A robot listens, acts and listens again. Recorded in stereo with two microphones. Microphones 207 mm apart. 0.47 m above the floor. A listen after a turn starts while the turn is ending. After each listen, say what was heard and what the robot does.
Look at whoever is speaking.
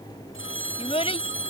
The child speaking: about 30° left or 150° left. Turn 30° left.
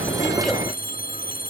Keep listening.
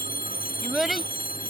Found it: a child speaking, straight ahead.